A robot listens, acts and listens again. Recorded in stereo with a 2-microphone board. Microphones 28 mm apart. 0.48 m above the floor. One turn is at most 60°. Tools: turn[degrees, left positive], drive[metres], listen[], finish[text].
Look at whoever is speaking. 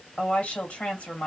Thought: The woman speaking: about 55° left or 125° left.
Action: turn[55]
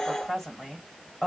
Thought: So it is at 10° left.
Action: turn[10]
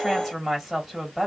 Action: finish[Found it: a woman speaking, straight ahead, 1 to 2 m away.]